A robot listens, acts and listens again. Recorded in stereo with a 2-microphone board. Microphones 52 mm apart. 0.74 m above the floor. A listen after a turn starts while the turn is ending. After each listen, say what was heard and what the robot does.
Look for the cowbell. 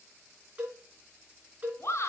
The cowbell: about 35° right or 145° right. Turn 35° right.
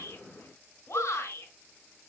Keep listening.
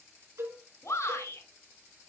So it is at 110° right. Turn 110° right.
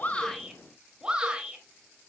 Keep listening.
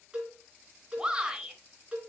The cowbell is now 15° right. Turn 15° right.
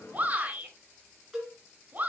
Found it: a cowbell, straight ahead, 2 to 4 m away.